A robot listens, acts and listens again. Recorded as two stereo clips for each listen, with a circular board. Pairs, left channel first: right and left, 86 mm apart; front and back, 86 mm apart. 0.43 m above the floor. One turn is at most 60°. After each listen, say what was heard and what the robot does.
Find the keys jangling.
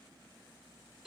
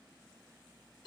Keep listening.
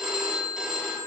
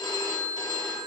Keep listening.
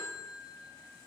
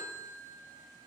I can't make out keys jangling, only a phone ringing.